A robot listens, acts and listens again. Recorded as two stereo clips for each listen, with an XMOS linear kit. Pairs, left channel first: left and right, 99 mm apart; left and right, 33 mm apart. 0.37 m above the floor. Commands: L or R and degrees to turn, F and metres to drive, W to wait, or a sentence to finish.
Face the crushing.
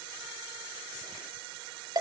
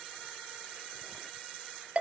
W
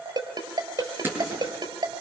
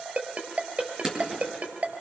R20
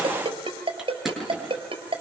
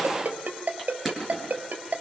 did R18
Facing the crushing.